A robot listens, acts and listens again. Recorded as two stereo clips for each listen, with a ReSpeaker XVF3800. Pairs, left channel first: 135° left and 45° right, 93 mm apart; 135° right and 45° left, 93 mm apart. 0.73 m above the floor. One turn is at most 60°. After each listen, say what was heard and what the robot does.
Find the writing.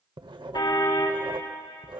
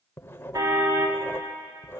The writing: 70° right. Turn 60° right.
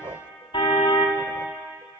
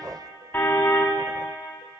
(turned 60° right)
The writing is now 10° right. Turn 10° right.
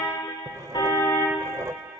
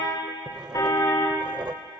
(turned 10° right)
Facing the writing.